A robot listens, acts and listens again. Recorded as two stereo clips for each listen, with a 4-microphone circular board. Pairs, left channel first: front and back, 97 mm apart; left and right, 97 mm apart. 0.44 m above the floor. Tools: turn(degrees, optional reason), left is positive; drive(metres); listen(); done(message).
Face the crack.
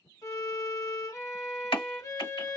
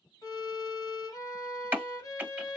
turn(degrees=-25, reason="The crack: 25° right.")
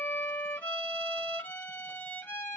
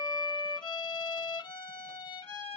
done("Facing where the crack came from. I can't hear it now.")